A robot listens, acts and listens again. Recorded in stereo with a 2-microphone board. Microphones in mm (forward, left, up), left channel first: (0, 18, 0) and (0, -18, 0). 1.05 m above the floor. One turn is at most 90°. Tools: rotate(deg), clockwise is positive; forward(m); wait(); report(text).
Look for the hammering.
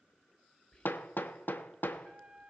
rotate(-70)
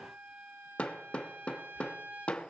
rotate(-35)
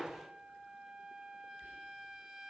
rotate(10)
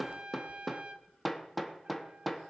report("Facing the hammering, under 1 m away.")